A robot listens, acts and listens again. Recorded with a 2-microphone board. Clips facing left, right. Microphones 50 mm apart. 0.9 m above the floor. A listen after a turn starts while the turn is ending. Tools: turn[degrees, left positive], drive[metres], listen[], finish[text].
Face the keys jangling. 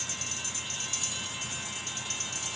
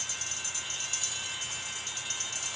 Action: listen[]
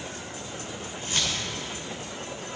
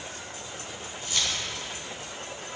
Thought: The keys jangling: about 30° left or 150° left.
Action: turn[30]
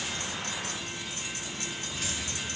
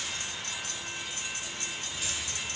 Action: listen[]
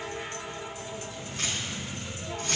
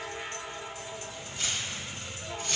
Thought: So it is at 125° left.
Action: turn[125]
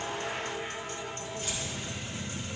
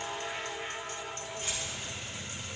Action: listen[]
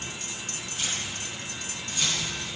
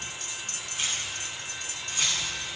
Thought: The keys jangling is now 25° right.
Action: turn[-25]
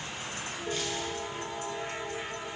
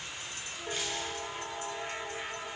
Action: listen[]
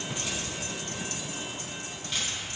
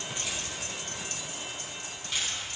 Action: finish[Facing the keys jangling.]